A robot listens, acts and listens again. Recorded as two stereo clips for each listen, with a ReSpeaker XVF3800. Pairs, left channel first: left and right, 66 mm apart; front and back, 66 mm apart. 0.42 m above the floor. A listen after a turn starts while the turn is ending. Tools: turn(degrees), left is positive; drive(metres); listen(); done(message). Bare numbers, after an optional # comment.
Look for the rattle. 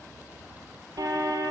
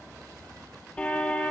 listen()
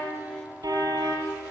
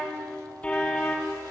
listen()
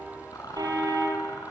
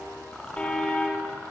# The rattle: 75° left.
turn(75)
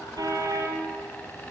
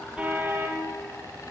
listen()
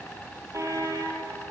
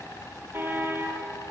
# The rattle is now 25° left.
turn(25)
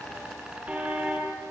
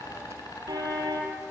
# The rattle is now 10° right.
turn(-10)
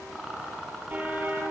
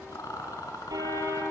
done("Found it: a rattle, straight ahead.")